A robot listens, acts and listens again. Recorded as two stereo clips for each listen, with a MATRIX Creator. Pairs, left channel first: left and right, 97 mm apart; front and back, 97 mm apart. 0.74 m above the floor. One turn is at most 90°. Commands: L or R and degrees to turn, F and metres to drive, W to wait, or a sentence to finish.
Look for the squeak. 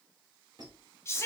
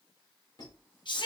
R45
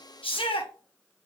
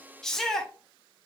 W
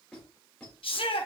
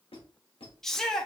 L10
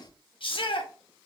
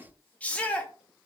Facing the squeak.